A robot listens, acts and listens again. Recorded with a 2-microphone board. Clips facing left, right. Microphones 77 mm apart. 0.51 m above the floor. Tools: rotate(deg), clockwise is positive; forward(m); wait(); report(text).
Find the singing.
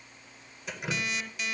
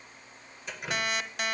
wait()
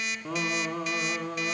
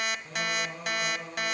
rotate(-90)
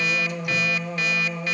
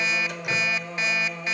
report("Found it: singing, straight ahead, over 4 m away.")